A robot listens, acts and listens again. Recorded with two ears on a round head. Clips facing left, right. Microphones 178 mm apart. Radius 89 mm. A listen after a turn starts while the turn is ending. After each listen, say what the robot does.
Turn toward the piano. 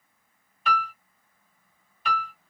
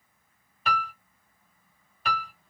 Turn 35° right.
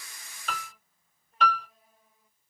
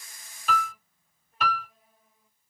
Found it: a piano, straight ahead.